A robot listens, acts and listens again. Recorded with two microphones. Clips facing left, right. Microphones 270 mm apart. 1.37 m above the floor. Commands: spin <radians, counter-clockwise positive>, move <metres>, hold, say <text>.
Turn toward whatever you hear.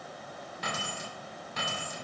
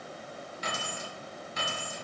spin 1.13
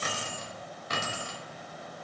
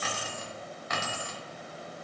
spin 0.61
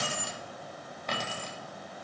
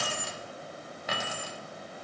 spin -0.17
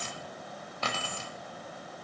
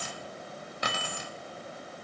spin -0.26
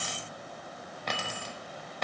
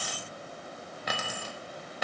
say Facing the keys jangling, 1 to 2 m away.